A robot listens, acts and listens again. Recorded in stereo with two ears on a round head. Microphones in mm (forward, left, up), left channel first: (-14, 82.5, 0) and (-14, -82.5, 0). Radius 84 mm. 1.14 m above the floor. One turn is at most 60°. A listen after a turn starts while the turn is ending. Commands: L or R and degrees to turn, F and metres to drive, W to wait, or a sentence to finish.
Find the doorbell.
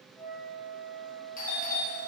L50
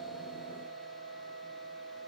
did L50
W
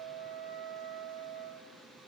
W
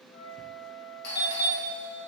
L60
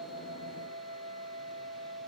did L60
L15
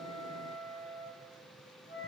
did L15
W
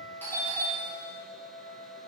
L10
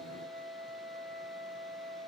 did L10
W
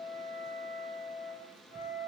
W
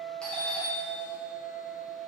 Facing the doorbell.